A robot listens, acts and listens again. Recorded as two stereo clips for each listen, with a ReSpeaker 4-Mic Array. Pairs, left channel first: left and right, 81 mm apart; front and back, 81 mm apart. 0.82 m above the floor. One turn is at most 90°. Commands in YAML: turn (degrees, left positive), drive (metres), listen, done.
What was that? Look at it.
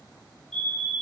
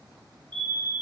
turn: 90
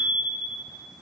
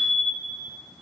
turn: 90
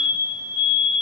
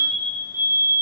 turn: 30
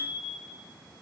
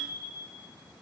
listen: true
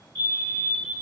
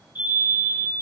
turn: 20
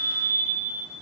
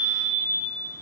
turn: 10
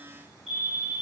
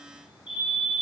done: "Found it: a fire alarm, straight ahead, 2 to 4 m away."